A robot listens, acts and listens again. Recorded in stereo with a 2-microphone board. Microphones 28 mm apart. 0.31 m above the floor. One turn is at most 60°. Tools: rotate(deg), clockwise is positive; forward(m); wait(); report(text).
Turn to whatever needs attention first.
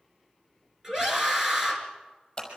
rotate(15)
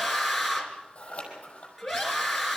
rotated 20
report("Found it: a scream, straight ahead, over 4 m away.")